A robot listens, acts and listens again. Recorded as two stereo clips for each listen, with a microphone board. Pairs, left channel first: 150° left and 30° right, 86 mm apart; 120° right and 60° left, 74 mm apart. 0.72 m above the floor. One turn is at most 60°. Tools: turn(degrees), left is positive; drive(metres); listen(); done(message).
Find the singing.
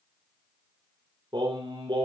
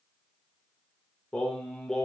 turn(degrees=-35)
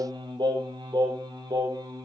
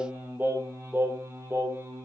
turn(degrees=10)
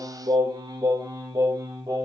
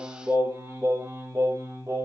turn(degrees=10)
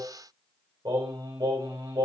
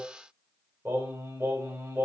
done("Found it: singing, straight ahead, 2 to 4 m away.")